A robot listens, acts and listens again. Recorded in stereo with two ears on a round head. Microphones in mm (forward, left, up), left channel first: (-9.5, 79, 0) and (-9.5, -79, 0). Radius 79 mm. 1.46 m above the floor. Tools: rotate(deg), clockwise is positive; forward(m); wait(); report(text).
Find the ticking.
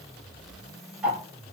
rotate(30)
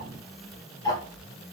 rotate(-20)
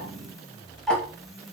report("Facing the ticking.")